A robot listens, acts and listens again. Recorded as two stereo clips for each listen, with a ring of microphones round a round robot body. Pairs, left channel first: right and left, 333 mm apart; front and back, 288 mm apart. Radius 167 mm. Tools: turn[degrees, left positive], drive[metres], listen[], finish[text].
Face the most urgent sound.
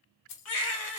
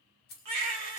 Thought: The baby crying: 135° right.
Action: turn[-135]
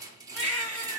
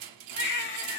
Action: finish[Found it: a baby crying, straight ahead.]